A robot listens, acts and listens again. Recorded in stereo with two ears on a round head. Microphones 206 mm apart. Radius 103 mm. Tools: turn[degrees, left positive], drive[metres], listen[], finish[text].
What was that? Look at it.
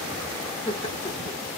Thought: The laughter: about 20° left or 160° left.
Action: turn[20]
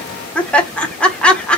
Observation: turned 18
Action: finish[Facing the laughter, 1 to 2 m away.]